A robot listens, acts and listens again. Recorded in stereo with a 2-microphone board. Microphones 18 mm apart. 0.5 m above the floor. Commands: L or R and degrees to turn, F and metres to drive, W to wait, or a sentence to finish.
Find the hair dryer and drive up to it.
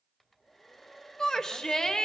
L30
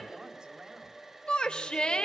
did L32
R20
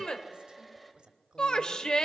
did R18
F1.0
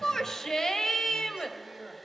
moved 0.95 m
F1.0
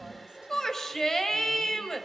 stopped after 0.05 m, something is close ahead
L10
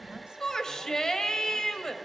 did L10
Arrived at the hair dryer, straight ahead.